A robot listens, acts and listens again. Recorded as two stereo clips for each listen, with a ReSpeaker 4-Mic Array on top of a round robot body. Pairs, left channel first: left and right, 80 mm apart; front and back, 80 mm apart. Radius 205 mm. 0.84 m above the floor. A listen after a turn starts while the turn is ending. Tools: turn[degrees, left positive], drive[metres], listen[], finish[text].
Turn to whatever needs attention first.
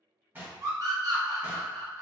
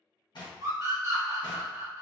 Thought: The scream: 135° right.
Action: turn[-135]
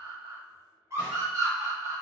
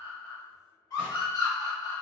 Thought: The scream is now 35° right.
Action: turn[-35]
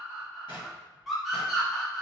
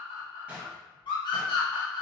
Action: finish[Facing the scream, 1 to 2 m away.]